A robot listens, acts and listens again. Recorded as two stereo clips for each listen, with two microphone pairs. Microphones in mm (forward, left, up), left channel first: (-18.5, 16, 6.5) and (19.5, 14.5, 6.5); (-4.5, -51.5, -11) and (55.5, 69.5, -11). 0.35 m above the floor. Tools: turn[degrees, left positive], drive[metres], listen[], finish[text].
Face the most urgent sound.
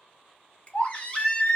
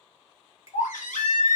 Thought: The baby crying: 120° right.
Action: turn[-120]
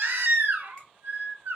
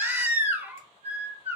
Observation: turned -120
Thought: The baby crying is now 10° right.
Action: turn[-10]
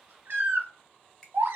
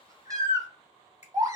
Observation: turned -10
Action: finish[Facing the baby crying, under 1 m away.]